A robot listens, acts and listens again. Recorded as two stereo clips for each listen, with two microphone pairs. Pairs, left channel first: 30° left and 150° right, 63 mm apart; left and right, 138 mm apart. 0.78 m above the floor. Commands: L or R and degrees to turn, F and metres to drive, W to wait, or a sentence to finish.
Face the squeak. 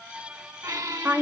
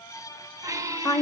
R155
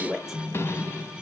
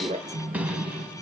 R10
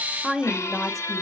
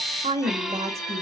Found it: a squeak, straight ahead.